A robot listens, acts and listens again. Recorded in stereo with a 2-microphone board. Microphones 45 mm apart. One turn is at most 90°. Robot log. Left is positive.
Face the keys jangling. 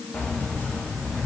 note: The keys jangling: about 45° left or 135° left.
cmd yaw +45
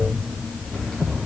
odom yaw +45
note: So it is at 20° left.
cmd yaw +20
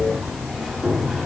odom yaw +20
end: Found it: keys jangling, straight ahead, 2 to 4 m away.